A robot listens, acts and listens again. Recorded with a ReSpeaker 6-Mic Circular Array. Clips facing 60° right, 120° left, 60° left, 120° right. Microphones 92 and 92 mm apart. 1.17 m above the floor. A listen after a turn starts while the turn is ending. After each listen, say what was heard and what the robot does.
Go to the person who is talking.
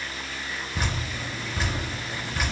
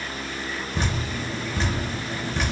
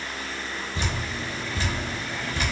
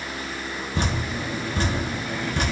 Keep listening.
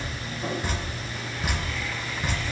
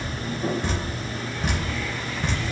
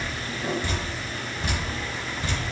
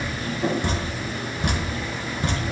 Keep listening.
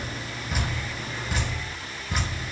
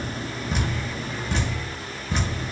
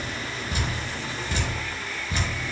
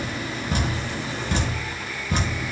I can't make out anyone speaking to turn to.